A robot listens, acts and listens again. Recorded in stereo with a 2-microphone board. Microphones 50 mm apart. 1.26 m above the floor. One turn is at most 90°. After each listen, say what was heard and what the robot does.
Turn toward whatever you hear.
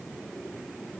Keep listening.
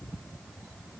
Keep listening.
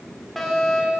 Turn 30° left.
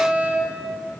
So it is at 20° right. Turn 20° right.
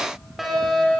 Facing the fire alarm.